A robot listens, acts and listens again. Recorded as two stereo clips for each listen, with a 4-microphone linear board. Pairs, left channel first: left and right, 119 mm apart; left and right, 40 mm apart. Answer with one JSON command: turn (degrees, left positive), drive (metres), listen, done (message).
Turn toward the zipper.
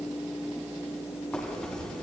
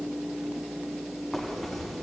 {"turn": 30}
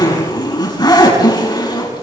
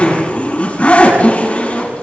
{"turn": 145}
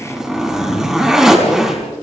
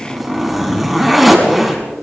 {"done": "Found it: a zipper, straight ahead, over 4 m away."}